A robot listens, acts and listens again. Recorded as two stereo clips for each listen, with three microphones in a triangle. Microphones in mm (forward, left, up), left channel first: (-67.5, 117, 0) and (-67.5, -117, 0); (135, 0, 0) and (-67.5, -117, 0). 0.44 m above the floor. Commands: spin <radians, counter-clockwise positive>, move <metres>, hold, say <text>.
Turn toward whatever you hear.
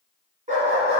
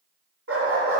spin -2.71
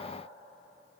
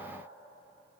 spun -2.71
hold
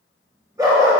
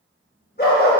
spin -0.35
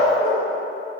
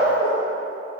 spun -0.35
say Facing the dog barking, 2 to 4 m away.